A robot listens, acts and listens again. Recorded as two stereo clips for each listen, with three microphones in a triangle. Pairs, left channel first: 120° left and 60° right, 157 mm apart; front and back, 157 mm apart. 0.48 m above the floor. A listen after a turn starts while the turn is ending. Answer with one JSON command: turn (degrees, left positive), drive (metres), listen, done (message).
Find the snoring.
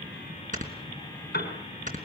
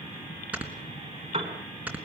{"turn": -100}
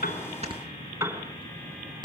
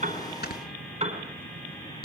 {"done": "Facing the snoring."}